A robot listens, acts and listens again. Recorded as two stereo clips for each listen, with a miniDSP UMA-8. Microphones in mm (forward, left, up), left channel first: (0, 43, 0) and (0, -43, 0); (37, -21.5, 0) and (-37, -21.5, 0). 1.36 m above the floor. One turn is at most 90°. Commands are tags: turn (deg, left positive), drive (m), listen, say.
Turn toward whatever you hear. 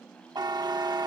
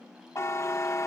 <turn deg="-50"/>
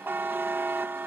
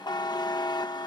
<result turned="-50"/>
<turn deg="-25"/>
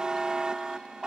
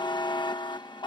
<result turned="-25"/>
<turn deg="-10"/>
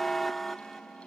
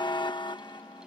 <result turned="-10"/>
<say>Found it: a buzzer, straight ahead.</say>